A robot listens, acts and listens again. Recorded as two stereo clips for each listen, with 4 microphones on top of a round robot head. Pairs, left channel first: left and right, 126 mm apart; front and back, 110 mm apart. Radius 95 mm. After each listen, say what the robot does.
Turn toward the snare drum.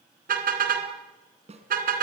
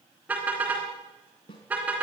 Turn 55° right.
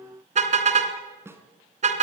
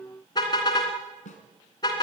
Turn 20° right.
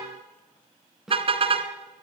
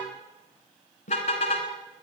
Facing the snare drum.